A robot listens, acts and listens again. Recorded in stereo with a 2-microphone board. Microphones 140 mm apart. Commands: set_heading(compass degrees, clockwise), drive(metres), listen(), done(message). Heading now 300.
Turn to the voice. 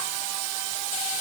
listen()
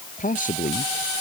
set_heading(230)
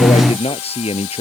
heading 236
set_heading(191)
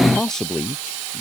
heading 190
done("Facing the man speaking.")